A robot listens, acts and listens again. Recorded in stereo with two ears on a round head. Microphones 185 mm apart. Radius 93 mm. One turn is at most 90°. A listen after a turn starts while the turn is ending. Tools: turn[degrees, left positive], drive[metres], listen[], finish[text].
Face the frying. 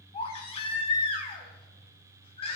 Action: listen[]
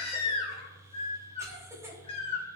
Action: listen[]
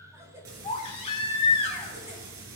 Thought: The frying: about 70° right or 110° right.
Action: turn[-70]
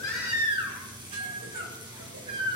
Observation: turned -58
Thought: So it is at 20° right.
Action: turn[-20]
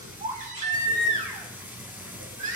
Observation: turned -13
Thought: The frying is now 10° right.
Action: turn[-10]
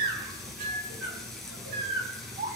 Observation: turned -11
Action: finish[Found it: frying, straight ahead.]